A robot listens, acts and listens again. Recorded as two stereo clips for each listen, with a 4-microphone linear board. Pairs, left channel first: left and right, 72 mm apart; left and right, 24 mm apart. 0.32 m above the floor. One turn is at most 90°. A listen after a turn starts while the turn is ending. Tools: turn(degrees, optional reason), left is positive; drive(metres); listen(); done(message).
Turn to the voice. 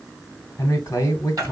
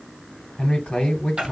turn(degrees=40, reason="The man speaking: about 40° left or 140° left.")
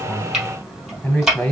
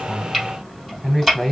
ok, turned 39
turn(degrees=15, reason="So it is at 15° left.")
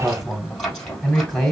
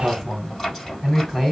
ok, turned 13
done("Found it: a man speaking, straight ahead, 1 to 2 m away.")